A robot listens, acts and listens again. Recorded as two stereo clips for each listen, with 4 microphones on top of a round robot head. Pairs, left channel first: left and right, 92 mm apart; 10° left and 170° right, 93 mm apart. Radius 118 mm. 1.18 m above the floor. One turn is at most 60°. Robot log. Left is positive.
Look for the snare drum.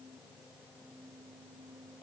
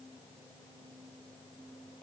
cmd idle
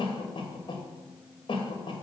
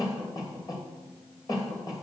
cmd idle
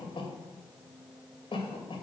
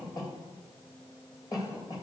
end: I can't make out a snare drum, only a cough.